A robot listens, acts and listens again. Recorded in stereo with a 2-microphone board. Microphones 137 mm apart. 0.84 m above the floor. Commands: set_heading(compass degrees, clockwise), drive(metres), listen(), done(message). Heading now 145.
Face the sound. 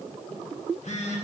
set_heading(85)
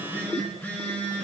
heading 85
set_heading(70)
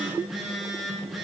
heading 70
done("Facing the phone buzzing.")